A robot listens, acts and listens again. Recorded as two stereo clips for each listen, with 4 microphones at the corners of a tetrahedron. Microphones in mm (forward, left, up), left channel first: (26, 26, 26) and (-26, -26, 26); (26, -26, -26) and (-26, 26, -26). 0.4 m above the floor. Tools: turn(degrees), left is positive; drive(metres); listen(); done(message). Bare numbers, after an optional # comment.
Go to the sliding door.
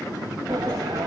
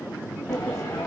# The sliding door: 100° right.
turn(-100)
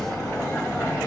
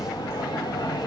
# The sliding door is now 20° right.
turn(-20)
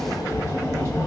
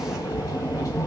drive(1.0)
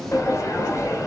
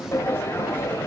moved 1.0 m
drive(1.0)
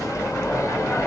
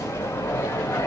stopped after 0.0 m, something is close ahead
done("Arrived at the sliding door, straight ahead.")